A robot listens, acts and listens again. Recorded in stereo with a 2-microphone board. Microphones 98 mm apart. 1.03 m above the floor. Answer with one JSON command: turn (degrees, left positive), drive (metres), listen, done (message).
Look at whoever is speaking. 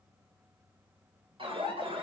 {"listen": true}
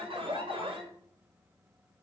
{"listen": true}
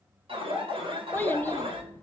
{"turn": 20}
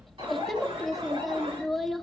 {"done": "Found it: a child speaking, straight ahead."}